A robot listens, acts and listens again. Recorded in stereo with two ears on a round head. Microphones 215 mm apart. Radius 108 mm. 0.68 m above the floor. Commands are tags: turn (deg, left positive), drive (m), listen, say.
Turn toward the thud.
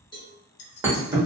<turn deg="-30"/>
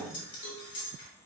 <listen/>
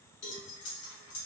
<say>I heard a thud, but can't make it out now. It was about 15° left or 135° right.</say>